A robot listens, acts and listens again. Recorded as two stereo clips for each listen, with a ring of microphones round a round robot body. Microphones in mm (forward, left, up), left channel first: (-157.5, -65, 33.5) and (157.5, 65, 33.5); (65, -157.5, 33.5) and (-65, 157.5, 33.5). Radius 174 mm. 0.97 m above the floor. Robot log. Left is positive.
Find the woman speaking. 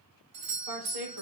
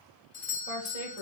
note: The woman speaking: 50° left.
cmd yaw +50
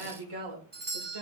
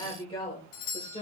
end: Facing the woman speaking.